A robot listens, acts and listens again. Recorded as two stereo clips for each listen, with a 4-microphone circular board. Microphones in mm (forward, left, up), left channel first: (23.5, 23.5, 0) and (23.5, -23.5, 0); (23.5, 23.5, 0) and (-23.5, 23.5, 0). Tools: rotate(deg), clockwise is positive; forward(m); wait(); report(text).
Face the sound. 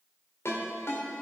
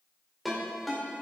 rotate(-90)
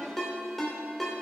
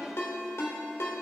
report("Found it: a ringtone, straight ahead.")